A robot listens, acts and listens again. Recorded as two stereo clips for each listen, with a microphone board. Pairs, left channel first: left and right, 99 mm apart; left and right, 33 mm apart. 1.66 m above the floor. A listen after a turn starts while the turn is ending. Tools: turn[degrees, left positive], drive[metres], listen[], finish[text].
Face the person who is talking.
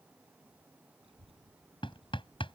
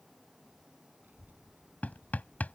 Action: turn[-90]
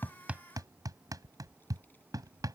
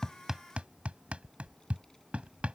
Thought: So it is at 20° left.
Action: turn[20]
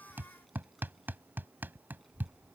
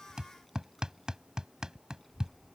Action: finish[Facing the child speaking.]